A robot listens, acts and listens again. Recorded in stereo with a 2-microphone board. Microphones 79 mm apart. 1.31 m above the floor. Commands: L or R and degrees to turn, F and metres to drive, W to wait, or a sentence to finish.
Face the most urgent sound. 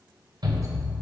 R60
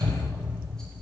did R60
R65
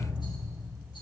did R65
W
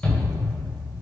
L15
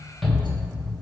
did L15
Found it: a shout, straight ahead.